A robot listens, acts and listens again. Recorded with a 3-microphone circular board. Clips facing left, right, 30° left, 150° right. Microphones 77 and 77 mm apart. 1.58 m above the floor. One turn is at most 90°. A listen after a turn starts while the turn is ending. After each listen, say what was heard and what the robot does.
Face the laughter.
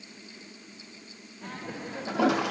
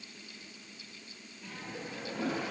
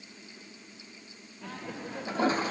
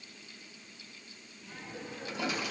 The laughter: 55° left. Turn 55° left.
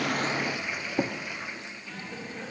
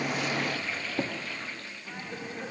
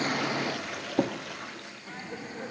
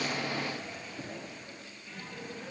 The laughter is now 15° right. Turn 15° right.
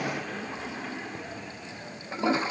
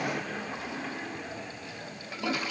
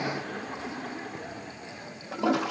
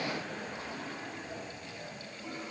Found it: laughter, straight ahead, over 4 m away.